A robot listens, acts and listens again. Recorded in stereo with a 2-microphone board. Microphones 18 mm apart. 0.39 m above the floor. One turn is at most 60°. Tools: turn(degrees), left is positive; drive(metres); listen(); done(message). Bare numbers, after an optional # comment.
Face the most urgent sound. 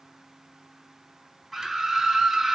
turn(30)
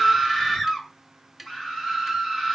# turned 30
# So it is at 140° left.
turn(60)
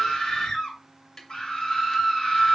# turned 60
# The scream is now 105° left.
turn(60)
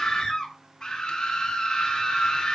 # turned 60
# The scream is now 40° left.
turn(40)
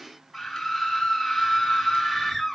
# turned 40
done("Facing the scream, over 4 m away.")